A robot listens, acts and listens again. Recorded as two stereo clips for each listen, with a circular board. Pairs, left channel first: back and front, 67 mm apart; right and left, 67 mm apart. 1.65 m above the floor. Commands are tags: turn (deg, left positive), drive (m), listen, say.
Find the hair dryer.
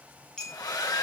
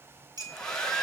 <turn deg="-170"/>
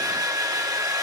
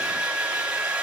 <turn deg="15"/>
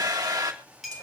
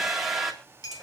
<say>Facing the hair dryer, 2 to 4 m away.</say>